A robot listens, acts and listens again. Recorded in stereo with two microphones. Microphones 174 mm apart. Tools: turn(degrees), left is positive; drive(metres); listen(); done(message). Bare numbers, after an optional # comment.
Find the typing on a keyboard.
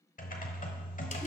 # The typing on a keyboard: about 50° left or 130° left.
turn(50)
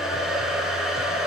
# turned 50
listen()
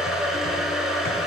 listen()
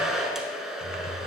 # So it is at 70° left.
turn(70)
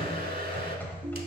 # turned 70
# The typing on a keyboard is now 10° left.
turn(10)
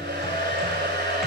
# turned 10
listen()
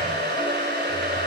listen()
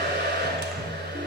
done("Facing the typing on a keyboard, 1 to 2 m away.")